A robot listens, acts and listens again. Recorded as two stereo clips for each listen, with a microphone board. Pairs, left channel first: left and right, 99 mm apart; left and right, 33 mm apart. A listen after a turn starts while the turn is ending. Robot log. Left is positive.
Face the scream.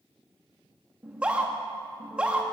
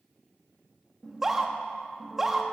cmd yaw -30
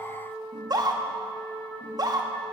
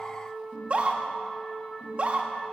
note: So it is at 140° right.
cmd yaw -140
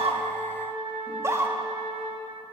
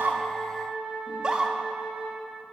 note: The scream is now 30° right.
cmd yaw -30
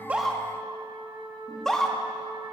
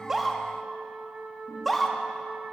end: Found it: a scream, straight ahead.